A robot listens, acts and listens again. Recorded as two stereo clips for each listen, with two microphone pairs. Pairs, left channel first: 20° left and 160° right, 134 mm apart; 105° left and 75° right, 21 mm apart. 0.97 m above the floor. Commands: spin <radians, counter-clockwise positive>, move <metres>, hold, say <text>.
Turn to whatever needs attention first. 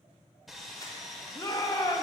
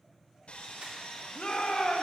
spin 1.31
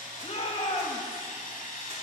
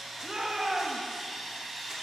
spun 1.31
spin -0.26
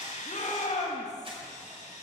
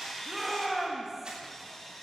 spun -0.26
say Facing the shout.